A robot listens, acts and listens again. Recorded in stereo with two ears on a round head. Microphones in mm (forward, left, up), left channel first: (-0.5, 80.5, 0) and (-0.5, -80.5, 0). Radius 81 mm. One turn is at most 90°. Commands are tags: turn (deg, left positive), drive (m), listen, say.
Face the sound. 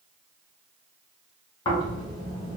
<turn deg="25"/>
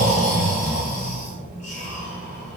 <turn deg="90"/>
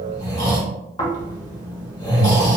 <turn deg="30"/>
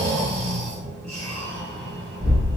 <say>Found it: snoring, straight ahead, 1 to 2 m away.</say>